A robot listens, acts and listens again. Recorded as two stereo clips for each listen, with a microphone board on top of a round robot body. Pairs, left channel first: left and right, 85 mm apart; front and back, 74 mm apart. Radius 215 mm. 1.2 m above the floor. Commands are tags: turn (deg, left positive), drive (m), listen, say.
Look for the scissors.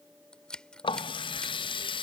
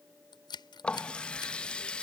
<turn deg="10"/>
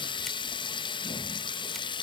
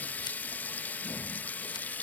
<listen/>
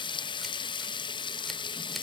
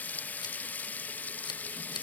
<listen/>
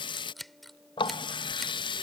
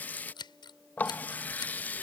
<say>Facing the scissors.</say>